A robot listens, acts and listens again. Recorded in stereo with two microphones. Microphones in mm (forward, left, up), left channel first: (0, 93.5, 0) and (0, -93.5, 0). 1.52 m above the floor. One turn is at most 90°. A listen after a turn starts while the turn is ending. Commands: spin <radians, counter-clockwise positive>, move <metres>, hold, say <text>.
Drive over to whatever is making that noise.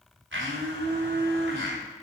spin -1.57
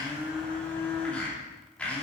move 1.0
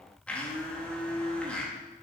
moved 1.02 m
move 1.0
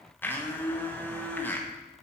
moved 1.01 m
spin 0.17
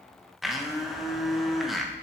move 1.0
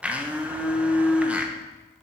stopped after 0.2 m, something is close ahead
say I am next to the blender.